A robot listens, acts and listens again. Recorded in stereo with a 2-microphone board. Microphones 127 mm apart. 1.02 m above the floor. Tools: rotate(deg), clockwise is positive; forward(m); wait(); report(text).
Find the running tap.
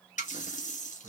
rotate(-90)
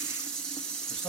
report("Facing the running tap.")